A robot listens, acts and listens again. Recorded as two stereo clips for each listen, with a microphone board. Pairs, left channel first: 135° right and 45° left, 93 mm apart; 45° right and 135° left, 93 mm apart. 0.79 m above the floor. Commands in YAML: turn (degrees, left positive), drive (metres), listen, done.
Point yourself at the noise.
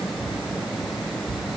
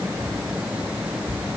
listen: true
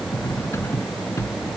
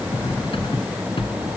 turn: -75
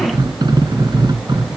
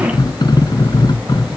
done: "Found it: cutlery clinking, straight ahead."